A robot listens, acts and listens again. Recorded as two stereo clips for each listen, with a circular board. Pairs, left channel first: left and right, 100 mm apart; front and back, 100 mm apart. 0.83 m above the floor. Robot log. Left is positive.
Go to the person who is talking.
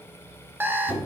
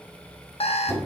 cmd idle
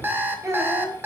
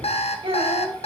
note: The child speaking: 150° right.
cmd yaw -150
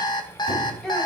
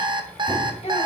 cmd fwd 1.0
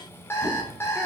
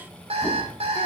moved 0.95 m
cmd idle
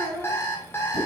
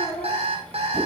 cmd fwd 1.0
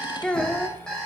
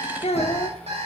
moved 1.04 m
note: The child speaking is now 10° left.
cmd yaw +10
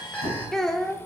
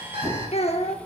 cmd fwd 1.0
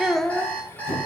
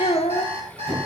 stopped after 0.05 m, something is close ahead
end: Arrived at the child speaking, straight ahead.